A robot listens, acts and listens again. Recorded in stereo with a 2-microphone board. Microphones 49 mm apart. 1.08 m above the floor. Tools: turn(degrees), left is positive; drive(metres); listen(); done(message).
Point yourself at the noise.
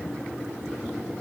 listen()
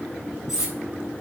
turn(degrees=-30)
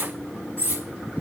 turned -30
turn(degrees=-140)
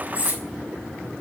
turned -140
turn(degrees=-35)
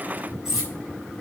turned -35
done("Facing the cutlery clinking, 2 to 4 m away.")